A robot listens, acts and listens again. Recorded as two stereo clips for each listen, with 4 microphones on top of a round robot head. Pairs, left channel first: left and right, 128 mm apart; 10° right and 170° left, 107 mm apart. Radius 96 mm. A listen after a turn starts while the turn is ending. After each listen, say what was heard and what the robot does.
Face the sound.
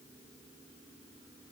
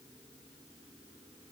Keep listening.
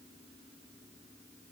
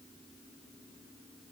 Keep listening.
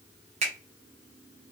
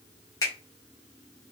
The finger snap: 65° right. Turn 65° right.
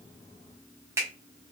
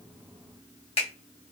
The finger snap is now 20° right. Turn 20° right.
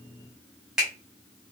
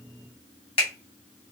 Found it: a finger snap, straight ahead.